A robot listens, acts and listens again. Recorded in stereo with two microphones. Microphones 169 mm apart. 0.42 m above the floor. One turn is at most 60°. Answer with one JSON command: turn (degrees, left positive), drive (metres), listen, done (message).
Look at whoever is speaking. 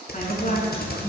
{"turn": 45}
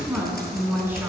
{"turn": -10}
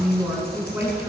{"turn": -10}
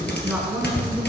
{"turn": -10}
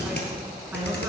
{"listen": true}
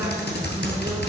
{"listen": true}
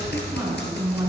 {"turn": -15}
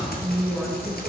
{"done": "Found it: a woman speaking, straight ahead, over 4 m away."}